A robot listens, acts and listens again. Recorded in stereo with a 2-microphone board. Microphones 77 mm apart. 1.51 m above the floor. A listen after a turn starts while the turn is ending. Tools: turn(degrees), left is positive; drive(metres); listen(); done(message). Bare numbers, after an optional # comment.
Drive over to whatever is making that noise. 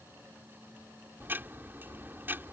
# The ticking: about 25° right or 155° right.
turn(-25)
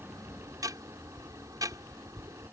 # So it is at 130° right.
turn(-130)
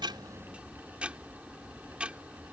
# The ticking is now 15° right.
turn(-15)
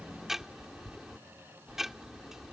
drive(1.0)
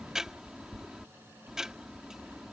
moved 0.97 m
# The ticking is now 10° right.
turn(-10)
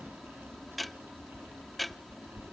drive(1.0)
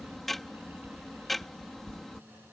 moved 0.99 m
drive(1.0)
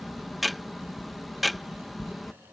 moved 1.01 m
drive(1.0)
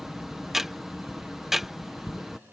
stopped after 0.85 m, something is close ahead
done("Arrived at the ticking, straight ahead.")